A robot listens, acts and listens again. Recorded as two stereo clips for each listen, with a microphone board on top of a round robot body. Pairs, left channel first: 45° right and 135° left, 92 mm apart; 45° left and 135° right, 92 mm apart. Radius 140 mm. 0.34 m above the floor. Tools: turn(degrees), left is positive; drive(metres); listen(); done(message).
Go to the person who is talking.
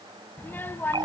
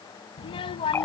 turn(degrees=25)
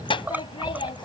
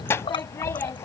turn(degrees=-20)
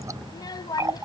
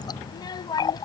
drive(metres=1.0)
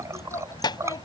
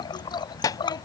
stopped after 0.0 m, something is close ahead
done("Blocked. The child speaking is further on, straight ahead.")